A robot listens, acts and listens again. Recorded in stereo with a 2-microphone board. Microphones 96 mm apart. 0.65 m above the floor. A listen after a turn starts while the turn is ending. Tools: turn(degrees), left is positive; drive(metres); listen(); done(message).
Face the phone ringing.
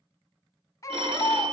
turn(degrees=-65)
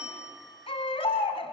listen()
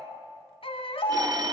turn(degrees=-45)
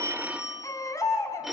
done("Facing the phone ringing, 1 to 2 m away.")